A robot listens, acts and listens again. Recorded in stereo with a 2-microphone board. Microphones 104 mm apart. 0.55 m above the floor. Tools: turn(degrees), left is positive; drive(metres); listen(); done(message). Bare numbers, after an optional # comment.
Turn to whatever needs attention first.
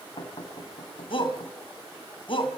# The shout: about 55° left or 125° left.
turn(55)
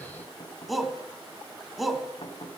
done("Facing the shout.")